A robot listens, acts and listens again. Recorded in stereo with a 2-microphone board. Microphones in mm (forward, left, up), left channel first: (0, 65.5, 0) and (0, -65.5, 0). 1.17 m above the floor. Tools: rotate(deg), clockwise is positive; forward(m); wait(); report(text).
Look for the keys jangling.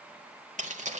rotate(65)
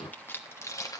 rotate(-30)
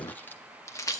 rotate(-30)
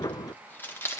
rotate(-20)
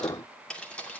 rotate(-10)
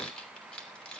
rotate(-10)
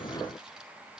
wait()
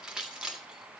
report("Facing the keys jangling, 2 to 4 m away.")